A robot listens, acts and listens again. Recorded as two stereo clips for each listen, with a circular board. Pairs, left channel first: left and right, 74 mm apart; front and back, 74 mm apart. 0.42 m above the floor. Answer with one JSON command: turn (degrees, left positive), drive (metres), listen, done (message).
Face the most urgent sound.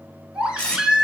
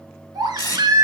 {"turn": -165}
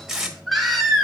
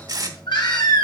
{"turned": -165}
{"done": "Facing the baby crying."}